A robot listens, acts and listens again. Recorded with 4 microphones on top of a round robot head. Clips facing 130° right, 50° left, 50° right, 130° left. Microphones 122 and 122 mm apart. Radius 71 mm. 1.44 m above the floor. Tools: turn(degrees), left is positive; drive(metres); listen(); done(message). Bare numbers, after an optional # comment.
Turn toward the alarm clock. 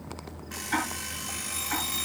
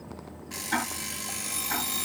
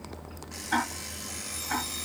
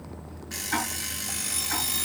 # The alarm clock: 105° left.
turn(105)
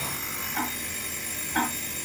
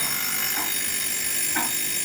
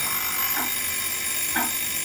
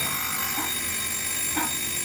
# The alarm clock is now 30° left.
turn(30)
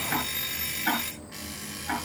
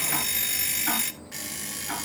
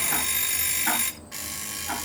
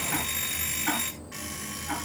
# The alarm clock is now 10° left.
turn(10)
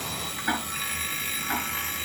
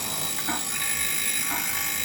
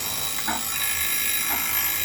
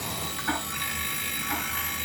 done("Facing the alarm clock.")